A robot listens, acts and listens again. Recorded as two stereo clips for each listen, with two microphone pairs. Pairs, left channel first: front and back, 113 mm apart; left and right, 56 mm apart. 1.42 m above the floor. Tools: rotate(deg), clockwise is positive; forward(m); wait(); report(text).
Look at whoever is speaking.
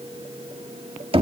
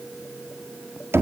wait()
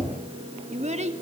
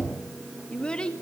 rotate(-160)
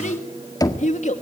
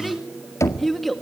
report("Facing the child speaking, 2 to 4 m away.")